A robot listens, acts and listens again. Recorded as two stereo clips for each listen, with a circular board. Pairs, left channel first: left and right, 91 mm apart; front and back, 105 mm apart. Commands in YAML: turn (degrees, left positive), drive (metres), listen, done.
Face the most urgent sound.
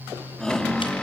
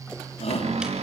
turn: 10
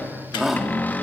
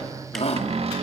done: "Facing the shout."